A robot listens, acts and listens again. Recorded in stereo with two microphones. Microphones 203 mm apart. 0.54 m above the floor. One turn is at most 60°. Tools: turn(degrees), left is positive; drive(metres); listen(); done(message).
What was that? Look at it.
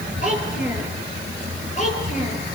turn(degrees=35)
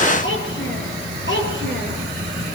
turn(degrees=60)
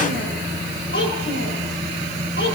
turn(degrees=60)
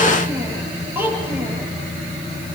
turn(degrees=-10)
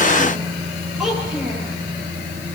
done("Facing the child speaking.")